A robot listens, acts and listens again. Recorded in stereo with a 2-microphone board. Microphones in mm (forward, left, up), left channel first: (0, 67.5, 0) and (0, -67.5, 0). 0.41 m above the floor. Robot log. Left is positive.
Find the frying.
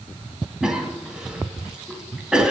cmd idle
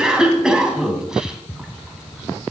cmd idle
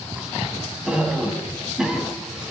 end: I can't make out frying to turn to.